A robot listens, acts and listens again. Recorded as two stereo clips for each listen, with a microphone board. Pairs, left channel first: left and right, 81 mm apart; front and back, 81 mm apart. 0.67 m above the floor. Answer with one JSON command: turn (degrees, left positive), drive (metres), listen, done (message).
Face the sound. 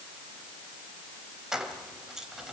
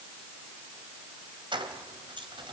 {"turn": -175}
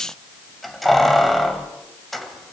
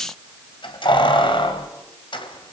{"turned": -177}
{"done": "Facing the keys jangling, 2 to 4 m away."}